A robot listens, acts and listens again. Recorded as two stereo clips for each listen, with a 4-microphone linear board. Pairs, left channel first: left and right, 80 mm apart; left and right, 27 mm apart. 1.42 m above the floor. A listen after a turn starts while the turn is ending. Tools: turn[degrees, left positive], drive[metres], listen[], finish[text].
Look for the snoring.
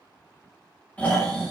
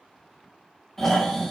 Thought: The snoring: about 20° left or 160° left.
Action: turn[20]
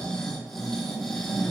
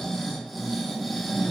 Action: finish[Facing the snoring.]